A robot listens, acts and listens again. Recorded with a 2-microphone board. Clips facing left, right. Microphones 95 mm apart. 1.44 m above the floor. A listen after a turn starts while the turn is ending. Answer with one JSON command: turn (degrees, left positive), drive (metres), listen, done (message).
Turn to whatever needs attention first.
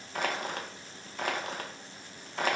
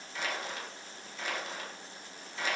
{"listen": true}
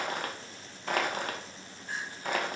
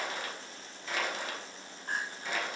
{"turn": -50}
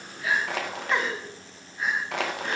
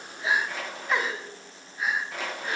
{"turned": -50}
{"done": "Facing the crying, 1 to 2 m away."}